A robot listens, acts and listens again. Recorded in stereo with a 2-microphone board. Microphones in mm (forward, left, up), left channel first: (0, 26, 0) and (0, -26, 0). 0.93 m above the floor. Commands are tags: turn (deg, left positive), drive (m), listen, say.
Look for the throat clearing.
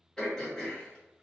<turn deg="30"/>
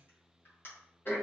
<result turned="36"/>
<turn deg="130"/>
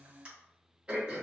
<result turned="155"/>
<turn deg="-25"/>
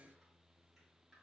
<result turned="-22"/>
<listen/>
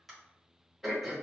<say>Facing the throat clearing.</say>